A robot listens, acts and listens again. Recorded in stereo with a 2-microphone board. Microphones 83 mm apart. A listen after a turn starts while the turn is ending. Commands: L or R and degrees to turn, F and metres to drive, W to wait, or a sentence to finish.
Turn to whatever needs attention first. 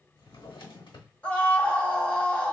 L15
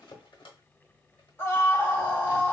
L150
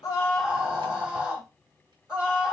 R15
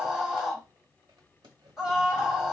Found it: a scream, straight ahead, 1 to 2 m away.